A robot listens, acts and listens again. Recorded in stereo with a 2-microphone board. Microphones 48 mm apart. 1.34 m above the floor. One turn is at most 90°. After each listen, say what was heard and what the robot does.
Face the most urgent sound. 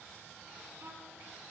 Keep listening.
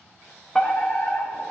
Turn 30° left.
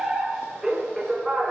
So it is at 15° right. Turn 15° right.
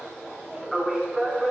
Found it: a fire alarm, straight ahead, 1 to 2 m away.